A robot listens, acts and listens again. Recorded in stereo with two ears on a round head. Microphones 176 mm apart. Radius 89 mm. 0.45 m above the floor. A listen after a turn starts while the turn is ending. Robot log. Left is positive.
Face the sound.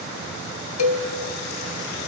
cmd yaw +90
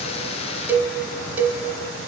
note: So it is at 10° right.
cmd yaw -10
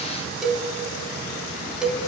end: Facing the cowbell, under 1 m away.